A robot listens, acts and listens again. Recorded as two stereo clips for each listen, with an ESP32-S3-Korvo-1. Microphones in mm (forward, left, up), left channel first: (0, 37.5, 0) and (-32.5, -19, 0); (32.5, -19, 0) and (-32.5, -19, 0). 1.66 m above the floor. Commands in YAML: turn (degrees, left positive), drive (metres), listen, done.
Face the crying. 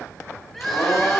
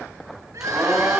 turn: 145
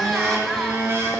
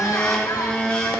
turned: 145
listen: true
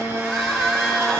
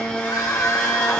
turn: -25
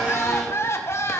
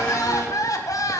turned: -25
turn: 15
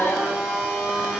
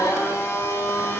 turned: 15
listen: true
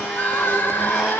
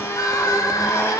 done: "Facing the crying, 1 to 2 m away."